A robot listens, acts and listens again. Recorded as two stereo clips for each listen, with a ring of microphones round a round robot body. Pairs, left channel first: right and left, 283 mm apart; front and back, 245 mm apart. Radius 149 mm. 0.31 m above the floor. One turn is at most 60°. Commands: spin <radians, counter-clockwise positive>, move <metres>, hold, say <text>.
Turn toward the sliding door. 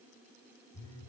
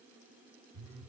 hold
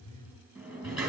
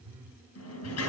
say Found it: a sliding door, straight ahead.